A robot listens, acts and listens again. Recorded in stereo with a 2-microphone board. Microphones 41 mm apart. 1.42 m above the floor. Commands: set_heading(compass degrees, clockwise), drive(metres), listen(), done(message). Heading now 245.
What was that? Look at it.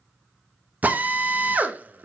set_heading(285)
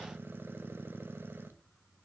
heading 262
listen()
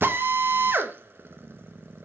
set_heading(22)
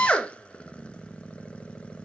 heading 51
set_heading(21)
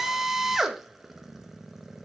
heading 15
set_heading(25)
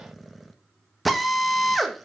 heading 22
done("Found it: a drill, straight ahead, 1 to 2 m away.")